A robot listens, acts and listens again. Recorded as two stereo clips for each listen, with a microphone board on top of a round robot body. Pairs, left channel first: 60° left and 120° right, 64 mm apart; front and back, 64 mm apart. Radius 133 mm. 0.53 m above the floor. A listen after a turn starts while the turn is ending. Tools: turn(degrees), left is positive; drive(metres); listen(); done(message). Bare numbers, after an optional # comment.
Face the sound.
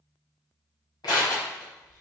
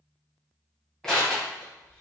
# The crushing: 80° left.
turn(80)
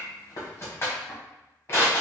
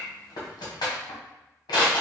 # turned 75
done("Facing the crushing.")